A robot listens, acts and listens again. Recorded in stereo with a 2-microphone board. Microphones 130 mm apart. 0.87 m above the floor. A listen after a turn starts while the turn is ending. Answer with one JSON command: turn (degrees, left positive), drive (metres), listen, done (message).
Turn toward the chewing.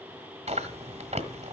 {"turn": -60}
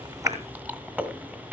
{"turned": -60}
{"turn": -15}
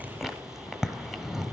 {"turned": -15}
{"done": "Found it: chewing, straight ahead."}